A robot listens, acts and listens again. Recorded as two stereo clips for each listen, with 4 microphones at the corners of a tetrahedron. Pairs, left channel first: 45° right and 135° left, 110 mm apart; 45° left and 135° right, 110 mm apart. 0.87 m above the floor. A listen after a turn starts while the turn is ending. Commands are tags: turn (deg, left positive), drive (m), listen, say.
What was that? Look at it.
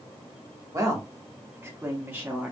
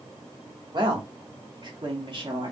<turn deg="-155"/>
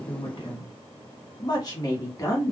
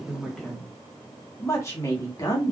<say>Facing the woman speaking, 1 to 2 m away.</say>